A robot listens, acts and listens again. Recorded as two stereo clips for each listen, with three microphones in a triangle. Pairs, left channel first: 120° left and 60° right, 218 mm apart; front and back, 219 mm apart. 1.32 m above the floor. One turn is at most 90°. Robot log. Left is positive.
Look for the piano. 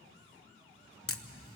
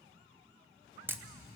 cmd idle
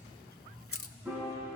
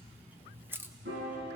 note: The piano: 145° right.
cmd yaw -90
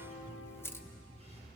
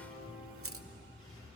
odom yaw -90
note: The piano is now 45° right.
cmd yaw -45
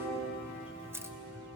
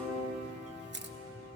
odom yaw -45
note: The piano is now 20° right.
cmd yaw -20
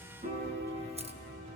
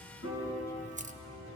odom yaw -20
end: Facing the piano, over 4 m away.